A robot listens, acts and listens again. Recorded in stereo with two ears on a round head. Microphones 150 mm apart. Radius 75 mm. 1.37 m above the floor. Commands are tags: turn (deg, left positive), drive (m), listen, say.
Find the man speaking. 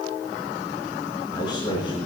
<turn deg="30"/>
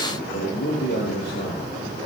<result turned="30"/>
<turn deg="110"/>
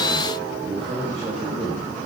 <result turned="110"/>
<turn deg="-35"/>
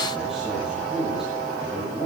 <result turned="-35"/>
<say>Facing the man speaking, over 4 m away.</say>